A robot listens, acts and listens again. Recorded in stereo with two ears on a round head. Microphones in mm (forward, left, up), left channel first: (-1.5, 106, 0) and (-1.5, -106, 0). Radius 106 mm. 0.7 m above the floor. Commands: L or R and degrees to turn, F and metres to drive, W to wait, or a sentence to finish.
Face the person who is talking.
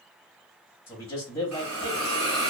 L30
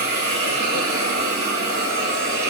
W
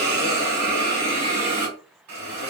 W
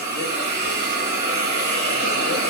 I heard a man speaking, but can't make it out now. It was about 20° right or 140° left.